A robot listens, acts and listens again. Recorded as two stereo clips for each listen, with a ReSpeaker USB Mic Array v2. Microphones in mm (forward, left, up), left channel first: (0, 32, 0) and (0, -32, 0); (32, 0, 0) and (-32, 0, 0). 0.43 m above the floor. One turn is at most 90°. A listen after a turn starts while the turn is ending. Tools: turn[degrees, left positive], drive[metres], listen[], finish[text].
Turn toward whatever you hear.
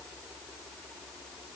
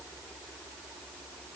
Action: listen[]
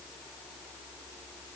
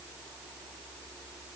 Action: listen[]
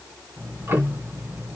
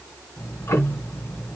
Thought: The ticking: 45° right.
Action: turn[-45]
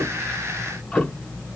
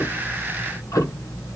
Thought: The ticking is now 10° left.
Action: turn[10]
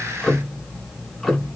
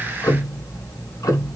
Action: finish[Found it: ticking, straight ahead.]